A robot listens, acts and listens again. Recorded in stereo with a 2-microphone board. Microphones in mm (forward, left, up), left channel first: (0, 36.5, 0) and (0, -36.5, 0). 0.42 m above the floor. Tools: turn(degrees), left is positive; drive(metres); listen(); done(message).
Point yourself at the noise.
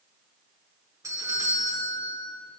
turn(degrees=-50)
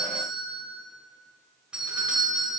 turn(degrees=-15)
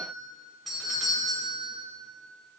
done("Facing the doorbell, 2 to 4 m away.")